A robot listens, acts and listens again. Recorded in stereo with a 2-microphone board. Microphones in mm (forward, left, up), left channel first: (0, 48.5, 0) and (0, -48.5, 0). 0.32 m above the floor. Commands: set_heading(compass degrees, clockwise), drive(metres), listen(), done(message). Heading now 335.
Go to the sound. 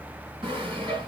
set_heading(30)
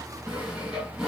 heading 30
drive(1.0)
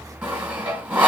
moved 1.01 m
set_heading(45)
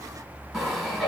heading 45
drive(1.0)
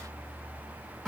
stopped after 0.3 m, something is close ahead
done("I am next to the sawing.")